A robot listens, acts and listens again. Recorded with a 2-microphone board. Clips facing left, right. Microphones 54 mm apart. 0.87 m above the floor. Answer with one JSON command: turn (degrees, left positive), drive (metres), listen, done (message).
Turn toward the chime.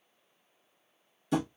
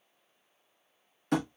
{"listen": true}
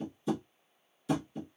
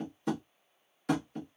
{"listen": true}
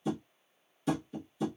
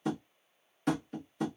{"done": "I can't make out a chime to turn to."}